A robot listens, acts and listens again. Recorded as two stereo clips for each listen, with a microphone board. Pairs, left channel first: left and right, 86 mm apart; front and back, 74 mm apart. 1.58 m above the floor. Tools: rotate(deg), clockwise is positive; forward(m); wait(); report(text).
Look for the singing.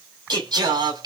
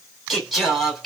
rotate(90)
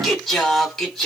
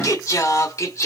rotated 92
report("Found it: singing, straight ahead.")